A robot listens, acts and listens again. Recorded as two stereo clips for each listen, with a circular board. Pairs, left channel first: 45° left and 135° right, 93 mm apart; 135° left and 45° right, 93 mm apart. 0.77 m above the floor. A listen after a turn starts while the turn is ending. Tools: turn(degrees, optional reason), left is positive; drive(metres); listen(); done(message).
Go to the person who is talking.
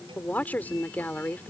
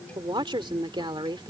turn(degrees=-25, reason="The woman speaking: 25° right.")
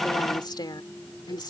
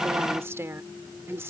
turn(degrees=15, reason="The woman speaking is now 15° left.")
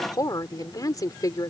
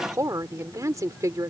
drive(metres=1.0)
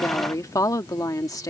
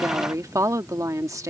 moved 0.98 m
drive(metres=1.0)
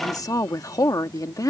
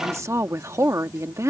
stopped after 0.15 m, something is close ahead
done("Arrived at the woman speaking, straight ahead.")